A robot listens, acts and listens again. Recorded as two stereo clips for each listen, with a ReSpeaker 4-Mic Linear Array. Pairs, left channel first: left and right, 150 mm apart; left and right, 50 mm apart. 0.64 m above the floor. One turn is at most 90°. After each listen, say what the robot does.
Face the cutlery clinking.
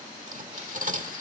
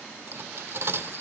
Turn 60° right.
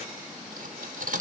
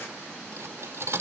Turn 60° right.
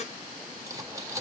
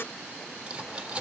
Turn 20° right.
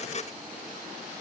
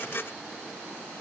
Keep listening.
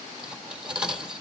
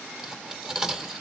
Facing the cutlery clinking.